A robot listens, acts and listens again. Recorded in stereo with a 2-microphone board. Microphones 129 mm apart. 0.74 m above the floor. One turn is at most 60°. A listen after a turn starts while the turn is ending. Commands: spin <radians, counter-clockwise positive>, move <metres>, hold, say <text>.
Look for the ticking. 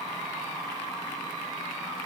hold
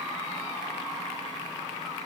hold
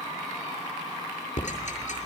spin 1.05
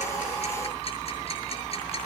spin 0.79
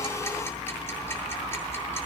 hold
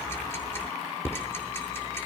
spin 0.26
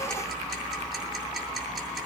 say Found it: ticking, straight ahead, over 4 m away.